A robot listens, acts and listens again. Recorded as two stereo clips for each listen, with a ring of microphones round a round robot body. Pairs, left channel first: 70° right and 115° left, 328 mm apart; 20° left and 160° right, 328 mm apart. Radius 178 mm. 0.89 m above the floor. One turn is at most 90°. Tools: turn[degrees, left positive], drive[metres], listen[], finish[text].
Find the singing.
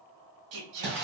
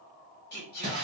Thought: The singing: 85° left.
Action: turn[85]
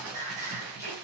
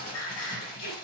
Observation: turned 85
Thought: The singing is now 30° left.
Action: turn[30]
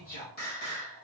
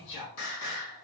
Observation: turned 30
Action: finish[Facing the singing, 1 to 2 m away.]